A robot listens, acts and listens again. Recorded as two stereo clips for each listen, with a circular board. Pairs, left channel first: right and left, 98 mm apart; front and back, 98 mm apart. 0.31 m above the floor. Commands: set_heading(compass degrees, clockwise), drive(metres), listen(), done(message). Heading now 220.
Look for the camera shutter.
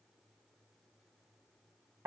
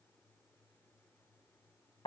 listen()
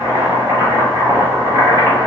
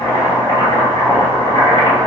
listen()
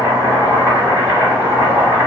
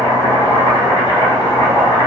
done("I can't make out a camera shutter to turn to.")